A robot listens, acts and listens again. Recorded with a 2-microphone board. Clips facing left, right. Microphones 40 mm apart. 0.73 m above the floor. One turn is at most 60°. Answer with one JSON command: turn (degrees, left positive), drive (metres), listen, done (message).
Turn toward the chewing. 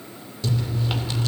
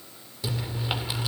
{"turn": -15}
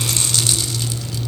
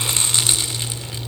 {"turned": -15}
{"turn": -60}
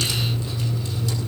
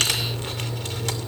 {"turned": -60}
{"turn": -60}
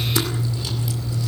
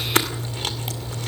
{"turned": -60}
{"turn": -60}
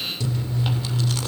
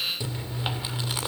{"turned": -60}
{"turn": -20}
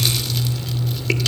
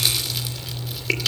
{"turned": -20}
{"done": "Facing the chewing, 2 to 4 m away."}